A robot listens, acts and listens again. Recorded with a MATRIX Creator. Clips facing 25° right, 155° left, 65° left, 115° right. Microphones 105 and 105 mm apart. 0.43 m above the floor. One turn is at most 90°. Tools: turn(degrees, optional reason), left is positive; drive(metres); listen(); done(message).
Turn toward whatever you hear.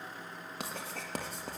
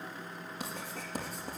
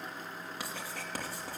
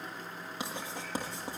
turn(degrees=-40, reason="The writing: 40° right.")
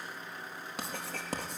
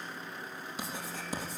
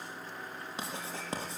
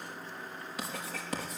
done("Found it: writing, straight ahead.")